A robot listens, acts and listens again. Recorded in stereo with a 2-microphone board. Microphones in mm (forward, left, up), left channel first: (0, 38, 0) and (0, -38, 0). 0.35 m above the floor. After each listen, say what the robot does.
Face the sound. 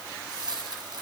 Turn 55° right.
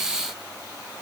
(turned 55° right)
Keep listening.
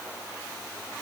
I heard a dropped coin, but can't make it out now. It was about straight ahead or 70° right.